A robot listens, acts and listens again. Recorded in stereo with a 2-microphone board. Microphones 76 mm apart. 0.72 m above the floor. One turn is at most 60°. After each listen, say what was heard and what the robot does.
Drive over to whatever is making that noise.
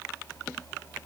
Keep listening.
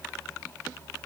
Keep listening.
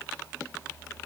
I can't make out anything.